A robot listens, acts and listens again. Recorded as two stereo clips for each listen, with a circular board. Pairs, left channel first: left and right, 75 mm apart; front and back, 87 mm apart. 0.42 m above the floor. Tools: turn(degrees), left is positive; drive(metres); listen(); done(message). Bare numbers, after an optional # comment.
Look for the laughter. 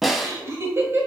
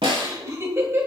# The laughter: 130° right.
turn(-130)
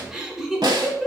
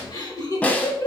done("Facing the laughter, 1 to 2 m away.")